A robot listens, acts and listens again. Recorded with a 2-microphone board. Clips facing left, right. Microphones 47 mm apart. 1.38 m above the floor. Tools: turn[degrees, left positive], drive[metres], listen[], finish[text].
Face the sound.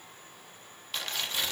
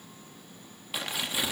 Action: turn[-30]
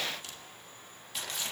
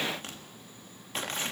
Thought: So it is at 135° right.
Action: turn[-135]
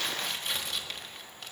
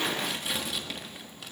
Action: finish[Facing the tearing paper, 1 to 2 m away.]